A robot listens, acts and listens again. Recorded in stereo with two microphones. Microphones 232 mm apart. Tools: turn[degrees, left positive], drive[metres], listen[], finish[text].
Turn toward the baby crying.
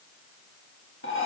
Action: listen[]
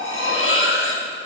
Action: listen[]
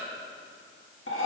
Action: finish[I can't make out a baby crying to turn to.]